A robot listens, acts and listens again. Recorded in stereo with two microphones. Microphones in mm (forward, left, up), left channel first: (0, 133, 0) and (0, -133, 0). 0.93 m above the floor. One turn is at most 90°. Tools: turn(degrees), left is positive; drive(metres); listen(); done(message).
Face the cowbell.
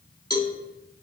turn(degrees=30)
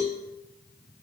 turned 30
turn(degrees=90)
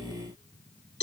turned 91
turn(degrees=45)
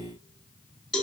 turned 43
done("Found it: a cowbell, straight ahead.")